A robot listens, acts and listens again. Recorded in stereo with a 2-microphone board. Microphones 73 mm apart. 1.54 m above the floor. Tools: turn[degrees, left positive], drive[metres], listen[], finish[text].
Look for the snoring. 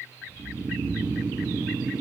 Thought: The snoring: about 65° right or 115° right.
Action: turn[-65]
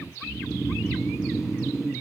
Action: finish[Facing the snoring.]